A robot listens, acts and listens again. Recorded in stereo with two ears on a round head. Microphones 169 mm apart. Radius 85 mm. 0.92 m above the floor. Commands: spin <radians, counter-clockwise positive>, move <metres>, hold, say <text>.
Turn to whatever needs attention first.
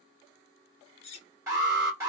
spin -0.26
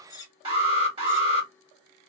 spin -2.62
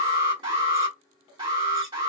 spin -0.44
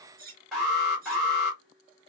say Found it: an alarm, straight ahead, 1 to 2 m away.